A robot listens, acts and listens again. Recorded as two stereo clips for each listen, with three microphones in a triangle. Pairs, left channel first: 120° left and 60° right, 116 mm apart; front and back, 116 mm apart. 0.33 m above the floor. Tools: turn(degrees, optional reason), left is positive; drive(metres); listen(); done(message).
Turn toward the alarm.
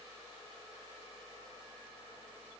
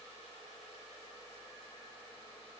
listen()
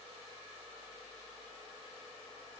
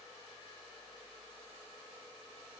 listen()
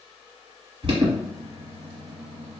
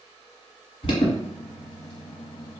turn(degrees=-30, reason="The alarm: 30° right.")
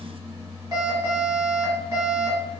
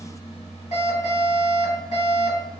done("Facing the alarm.")